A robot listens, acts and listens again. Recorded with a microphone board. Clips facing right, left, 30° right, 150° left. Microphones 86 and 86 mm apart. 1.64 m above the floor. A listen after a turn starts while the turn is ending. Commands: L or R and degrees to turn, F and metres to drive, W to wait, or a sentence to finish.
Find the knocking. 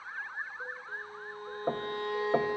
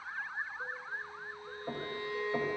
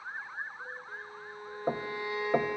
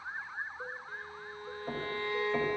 R55
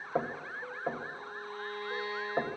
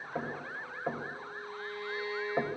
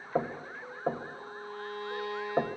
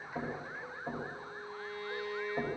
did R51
Found it: knocking, straight ahead, 1 to 2 m away.